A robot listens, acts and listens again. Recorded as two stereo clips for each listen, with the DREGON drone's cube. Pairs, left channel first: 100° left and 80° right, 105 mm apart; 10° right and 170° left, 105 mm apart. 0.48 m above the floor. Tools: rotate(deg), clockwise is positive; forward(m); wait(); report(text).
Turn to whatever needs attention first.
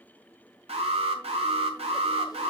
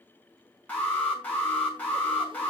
rotate(85)
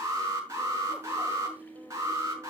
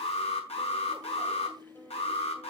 rotate(20)
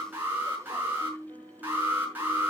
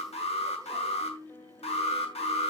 report("Facing the alarm, over 4 m away.")